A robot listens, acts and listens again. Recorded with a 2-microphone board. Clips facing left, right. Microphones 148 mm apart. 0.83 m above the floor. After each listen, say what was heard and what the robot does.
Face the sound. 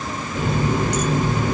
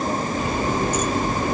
Turn 90° left.
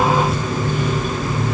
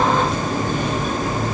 Found it: a running tap, straight ahead.